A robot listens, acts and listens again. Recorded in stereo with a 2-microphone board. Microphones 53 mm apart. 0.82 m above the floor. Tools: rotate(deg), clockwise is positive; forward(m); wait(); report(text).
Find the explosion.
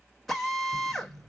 rotate(35)
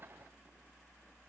wait()
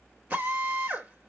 report("I heard an explosion, but can't make it out now. It was about straight ahead or 110° right.")